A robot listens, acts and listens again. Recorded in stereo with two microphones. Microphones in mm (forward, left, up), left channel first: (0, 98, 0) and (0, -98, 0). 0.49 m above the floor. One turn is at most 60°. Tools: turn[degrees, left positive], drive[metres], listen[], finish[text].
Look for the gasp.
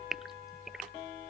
Action: turn[30]
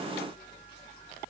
Action: listen[]
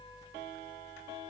Action: finish[I heard a gasp, but can't make it out now. It was about 30° right or 150° left.]